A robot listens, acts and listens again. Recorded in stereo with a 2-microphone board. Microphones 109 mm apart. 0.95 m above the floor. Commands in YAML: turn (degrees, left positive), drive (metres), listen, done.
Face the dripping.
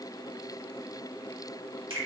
listen: true
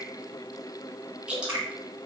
turn: -30
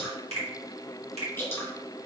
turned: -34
turn: 25
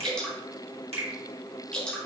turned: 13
turn: 10
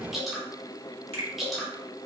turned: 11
done: "Found it: dripping, straight ahead."